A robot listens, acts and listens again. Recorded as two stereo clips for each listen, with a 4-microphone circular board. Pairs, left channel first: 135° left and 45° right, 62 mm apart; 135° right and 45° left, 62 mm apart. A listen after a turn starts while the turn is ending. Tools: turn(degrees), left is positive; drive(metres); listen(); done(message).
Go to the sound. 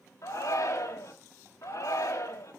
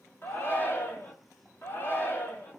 turn(degrees=170)
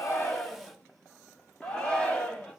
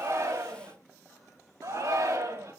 turn(degrees=65)
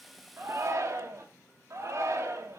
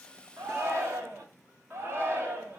drive(metres=1.0)
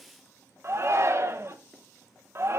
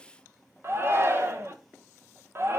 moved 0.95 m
drive(metres=1.0)
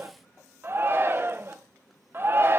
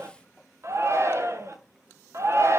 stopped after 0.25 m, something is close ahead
done("I am next to the shout.")